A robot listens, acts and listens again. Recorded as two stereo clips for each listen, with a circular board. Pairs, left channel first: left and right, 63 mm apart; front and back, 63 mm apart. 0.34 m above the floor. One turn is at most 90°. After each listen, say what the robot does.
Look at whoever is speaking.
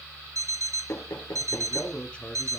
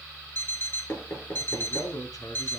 Turn 20° left.
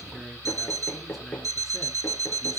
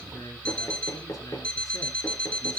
Keep listening.
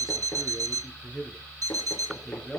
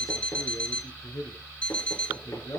Found it: a man speaking, straight ahead, 2 to 4 m away.